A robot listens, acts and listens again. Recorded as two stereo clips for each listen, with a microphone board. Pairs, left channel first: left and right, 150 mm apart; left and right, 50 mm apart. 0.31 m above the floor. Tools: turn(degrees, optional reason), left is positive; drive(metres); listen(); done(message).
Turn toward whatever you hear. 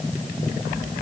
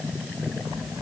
listen()
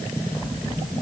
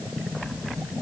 listen()
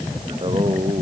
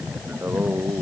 turn(degrees=-35, reason="The singing: about 35° right or 145° right.")
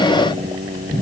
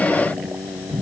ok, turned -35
turn(degrees=-110, reason="So it is at 110° right.")
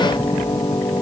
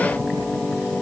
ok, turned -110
turn(degrees=25, reason="The singing is now 25° left.")
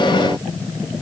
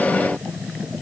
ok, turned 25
listen()
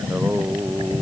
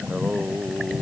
turn(degrees=-15, reason="The singing is now 15° right.")
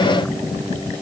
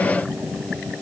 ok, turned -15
listen()
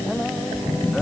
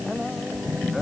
done("Facing the singing.")